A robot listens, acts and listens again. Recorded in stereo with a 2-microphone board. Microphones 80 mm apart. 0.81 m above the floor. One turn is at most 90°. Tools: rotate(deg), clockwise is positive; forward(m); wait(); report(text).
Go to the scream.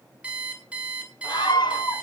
rotate(-75)
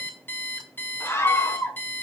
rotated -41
rotate(-35)
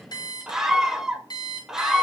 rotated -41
forward(1.0)
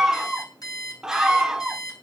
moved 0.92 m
forward(1.0)
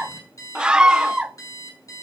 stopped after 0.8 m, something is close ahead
rotate(10)
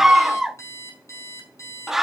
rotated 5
report("I am next to the scream.")